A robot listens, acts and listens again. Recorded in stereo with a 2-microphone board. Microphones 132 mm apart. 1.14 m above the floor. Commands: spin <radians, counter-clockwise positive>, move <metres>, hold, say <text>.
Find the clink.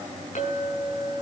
spin 1.22
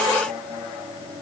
hold
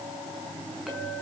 hold
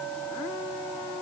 say Facing the clink.